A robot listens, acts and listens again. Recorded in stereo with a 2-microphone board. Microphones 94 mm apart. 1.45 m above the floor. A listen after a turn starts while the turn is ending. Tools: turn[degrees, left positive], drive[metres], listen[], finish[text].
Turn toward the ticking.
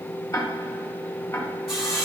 Thought: The ticking: about 30° left or 150° left.
Action: turn[30]
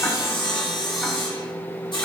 Action: listen[]
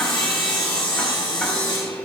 Action: listen[]
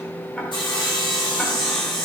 Action: finish[I heard ticking, but can't make it out now. It was about straight ahead or 120° left.]